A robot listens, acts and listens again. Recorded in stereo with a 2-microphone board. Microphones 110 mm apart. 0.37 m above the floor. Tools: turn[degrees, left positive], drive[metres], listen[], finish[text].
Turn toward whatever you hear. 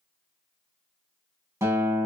Thought: The guitar: about 25° right or 155° right.
Action: turn[-25]
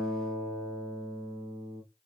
Action: finish[Found it: a guitar, straight ahead, 1 to 2 m away.]